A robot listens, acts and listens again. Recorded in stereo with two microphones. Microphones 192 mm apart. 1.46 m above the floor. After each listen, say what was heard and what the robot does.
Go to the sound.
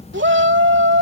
The shout: about 70° right or 110° right. Turn 70° right.
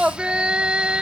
Drive 1.0 m forward.
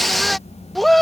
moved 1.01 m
Drive 1.0 m forward.
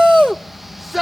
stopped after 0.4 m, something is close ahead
I am next to the shout.